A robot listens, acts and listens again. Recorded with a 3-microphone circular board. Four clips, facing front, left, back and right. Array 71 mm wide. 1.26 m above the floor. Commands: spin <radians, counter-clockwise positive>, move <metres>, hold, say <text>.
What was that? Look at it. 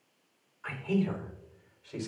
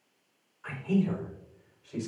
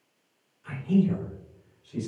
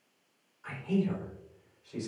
spin 0.17
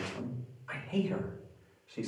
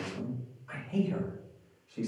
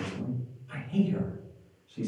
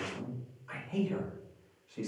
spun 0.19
say Found it: a man speaking, straight ahead.